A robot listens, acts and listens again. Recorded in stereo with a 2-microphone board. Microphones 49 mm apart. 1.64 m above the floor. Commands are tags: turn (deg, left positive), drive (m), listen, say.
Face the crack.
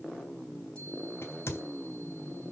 <turn deg="60"/>
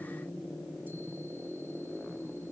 <listen/>
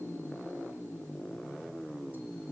<say>I heard a crack, but can't make it out now. It was about straight ahead or 60° left.</say>